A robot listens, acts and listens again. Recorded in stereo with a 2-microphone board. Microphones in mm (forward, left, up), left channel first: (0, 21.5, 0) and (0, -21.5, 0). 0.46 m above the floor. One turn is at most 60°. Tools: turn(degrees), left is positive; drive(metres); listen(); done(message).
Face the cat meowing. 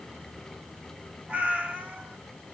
turn(degrees=-30)
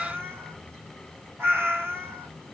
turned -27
turn(degrees=-60)
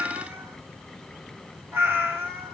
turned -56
turn(degrees=-60)
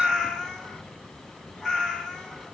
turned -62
done("Facing the cat meowing.")